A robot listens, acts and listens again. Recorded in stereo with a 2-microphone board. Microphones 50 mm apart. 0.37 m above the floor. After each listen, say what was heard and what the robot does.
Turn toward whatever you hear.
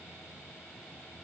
Keep listening.
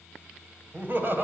The laughter: about 45° right or 135° right. Turn 45° right.
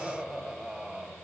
So it is at 20° right. Turn 20° right.
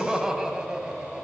The laughter is now 20° right. Turn 20° right.
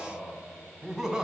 The laughter is now 10° right. Turn 10° right.
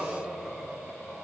Facing the laughter, 2 to 4 m away.